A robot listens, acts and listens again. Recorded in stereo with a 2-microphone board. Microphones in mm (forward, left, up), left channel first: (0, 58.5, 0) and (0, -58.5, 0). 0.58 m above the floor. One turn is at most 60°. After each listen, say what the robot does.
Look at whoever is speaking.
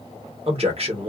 Turn 55° right.
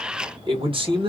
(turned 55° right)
Turn 55° right.
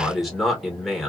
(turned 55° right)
Found it: a man speaking, straight ahead, 1 to 2 m away.